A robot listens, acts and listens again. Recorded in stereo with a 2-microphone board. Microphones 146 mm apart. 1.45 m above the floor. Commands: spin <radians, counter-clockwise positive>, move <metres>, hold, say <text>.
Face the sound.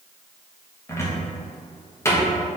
spin 0.26
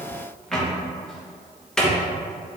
say Found it: a cupboard door, straight ahead, under 1 m away.